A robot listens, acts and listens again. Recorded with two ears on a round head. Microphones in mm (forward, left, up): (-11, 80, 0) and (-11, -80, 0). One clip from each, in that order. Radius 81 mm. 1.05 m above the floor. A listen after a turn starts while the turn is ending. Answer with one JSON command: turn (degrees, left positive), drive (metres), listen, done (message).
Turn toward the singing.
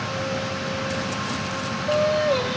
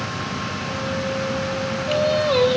{"turn": -60}
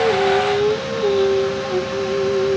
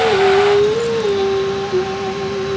{"done": "Facing the singing."}